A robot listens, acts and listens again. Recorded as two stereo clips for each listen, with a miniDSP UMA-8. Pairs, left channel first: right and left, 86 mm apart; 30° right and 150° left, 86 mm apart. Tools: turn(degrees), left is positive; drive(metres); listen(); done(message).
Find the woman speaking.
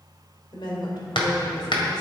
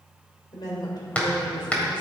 turn(degrees=-55)
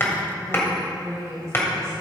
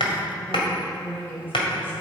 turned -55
turn(degrees=35)
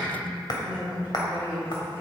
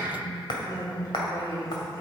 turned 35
turn(degrees=20)
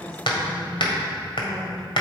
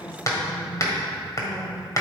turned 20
done("Facing the woman speaking.")